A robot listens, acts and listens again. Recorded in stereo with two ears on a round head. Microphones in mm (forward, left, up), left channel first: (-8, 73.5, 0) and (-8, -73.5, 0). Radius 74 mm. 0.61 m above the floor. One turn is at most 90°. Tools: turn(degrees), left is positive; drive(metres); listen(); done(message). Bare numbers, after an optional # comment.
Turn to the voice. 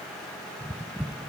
listen()
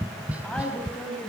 turn(30)
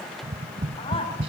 listen()
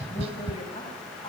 listen()
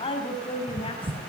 # So it is at 145° left.
turn(90)
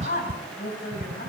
# The woman speaking is now 55° left.
turn(55)
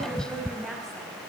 done("Found it: a woman speaking, straight ahead.")